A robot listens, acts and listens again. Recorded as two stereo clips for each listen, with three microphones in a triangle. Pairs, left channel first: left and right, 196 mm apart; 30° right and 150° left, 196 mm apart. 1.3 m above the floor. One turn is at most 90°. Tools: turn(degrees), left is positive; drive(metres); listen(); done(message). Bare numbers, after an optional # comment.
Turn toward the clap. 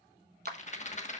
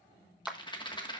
# The clap: 125° right.
turn(-90)
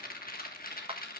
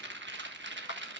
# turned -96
# The clap is now 30° right.
turn(-30)
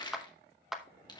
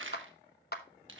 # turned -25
done("Facing the clap, under 1 m away.")